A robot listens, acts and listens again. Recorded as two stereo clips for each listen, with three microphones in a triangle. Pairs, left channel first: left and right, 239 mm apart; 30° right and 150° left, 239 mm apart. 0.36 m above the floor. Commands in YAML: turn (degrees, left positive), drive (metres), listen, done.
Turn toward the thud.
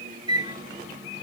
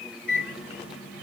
listen: true
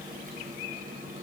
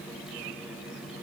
listen: true
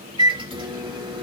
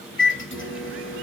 done: "I can't make out a thud, only a microwave."